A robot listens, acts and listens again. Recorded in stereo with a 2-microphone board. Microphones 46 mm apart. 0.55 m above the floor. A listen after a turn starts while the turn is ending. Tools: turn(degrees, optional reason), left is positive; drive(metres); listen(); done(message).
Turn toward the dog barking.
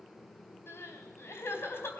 listen()
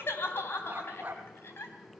turn(degrees=-30, reason="The dog barking: about 30° right or 150° right.")
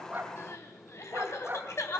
turn(degrees=-135, reason="So it is at 135° right.")
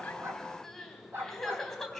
turn(degrees=-60, reason="The dog barking is now 60° right.")
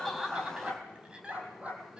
turn(degrees=-35, reason="The dog barking is now 35° right.")
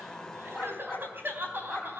done("Facing the dog barking.")